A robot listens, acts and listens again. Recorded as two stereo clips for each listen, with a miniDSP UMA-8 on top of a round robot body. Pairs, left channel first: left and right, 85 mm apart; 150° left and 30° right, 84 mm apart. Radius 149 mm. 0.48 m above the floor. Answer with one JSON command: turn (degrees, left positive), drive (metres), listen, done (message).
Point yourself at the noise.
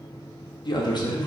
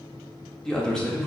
{"turn": 70}
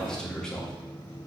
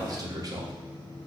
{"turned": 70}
{"turn": 10}
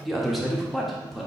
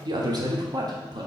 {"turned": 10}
{"done": "Found it: a man speaking, straight ahead."}